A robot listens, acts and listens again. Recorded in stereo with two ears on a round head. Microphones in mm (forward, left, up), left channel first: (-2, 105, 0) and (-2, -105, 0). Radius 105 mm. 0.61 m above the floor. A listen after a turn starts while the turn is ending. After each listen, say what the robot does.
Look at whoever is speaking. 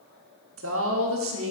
Turn 60° right.
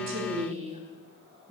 Turn 30° right.
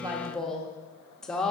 Facing the woman speaking, 1 to 2 m away.